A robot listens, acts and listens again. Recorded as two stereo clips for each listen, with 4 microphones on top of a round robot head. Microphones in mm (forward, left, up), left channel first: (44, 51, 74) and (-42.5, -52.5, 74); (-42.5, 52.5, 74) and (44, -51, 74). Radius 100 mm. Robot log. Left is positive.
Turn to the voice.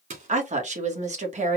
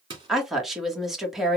note: The woman speaking: 135° right.
cmd yaw -135
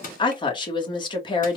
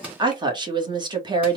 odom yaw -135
end: Found it: a woman speaking, straight ahead, 1 to 2 m away.